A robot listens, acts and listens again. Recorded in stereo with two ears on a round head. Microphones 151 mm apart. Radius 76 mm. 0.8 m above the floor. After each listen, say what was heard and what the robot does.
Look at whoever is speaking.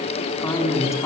The man speaking: about 20° left or 160° left. Turn 20° left.
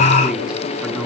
Facing the man speaking.